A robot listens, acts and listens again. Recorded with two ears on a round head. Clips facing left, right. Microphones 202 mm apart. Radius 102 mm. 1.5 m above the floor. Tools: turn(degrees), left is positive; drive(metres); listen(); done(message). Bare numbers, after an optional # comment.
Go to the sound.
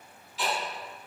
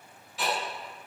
# The ticking: about 40° right or 140° right.
turn(-40)
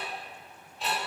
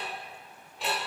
# So it is at 90° right.
turn(-90)
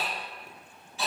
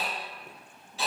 # The ticking is now 30° right.
turn(-30)
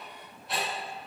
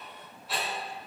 drive(1.0)
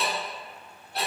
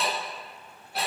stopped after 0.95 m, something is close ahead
done("I am next to the ticking.")